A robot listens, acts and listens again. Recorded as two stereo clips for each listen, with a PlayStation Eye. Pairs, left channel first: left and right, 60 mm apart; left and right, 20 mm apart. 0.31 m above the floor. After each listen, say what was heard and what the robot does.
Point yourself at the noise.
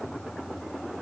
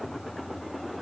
Keep listening.
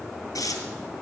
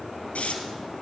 Turn 90° left.
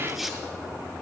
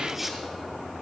Found it: tearing paper, straight ahead.